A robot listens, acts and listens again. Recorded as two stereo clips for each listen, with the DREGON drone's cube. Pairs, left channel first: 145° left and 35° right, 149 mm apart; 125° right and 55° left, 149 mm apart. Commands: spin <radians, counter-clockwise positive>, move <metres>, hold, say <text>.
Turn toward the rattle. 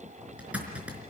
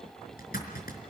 hold
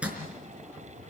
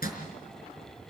hold
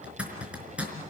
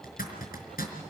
say I can't make out a rattle to turn to.